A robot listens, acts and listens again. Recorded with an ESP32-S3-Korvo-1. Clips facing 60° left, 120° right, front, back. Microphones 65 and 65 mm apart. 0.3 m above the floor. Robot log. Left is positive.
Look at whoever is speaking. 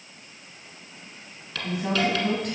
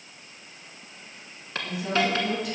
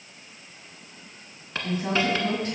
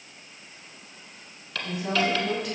note: The woman speaking: 40° left.
cmd yaw +40
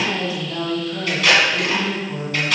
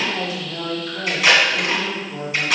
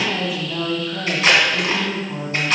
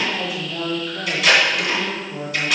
end: Facing the woman speaking, 2 to 4 m away.